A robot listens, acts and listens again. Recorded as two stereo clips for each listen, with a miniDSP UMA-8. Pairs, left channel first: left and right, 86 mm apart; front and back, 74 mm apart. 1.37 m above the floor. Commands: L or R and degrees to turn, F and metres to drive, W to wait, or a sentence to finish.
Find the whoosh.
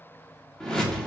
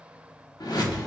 L10
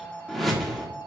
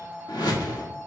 Facing the whoosh, 1 to 2 m away.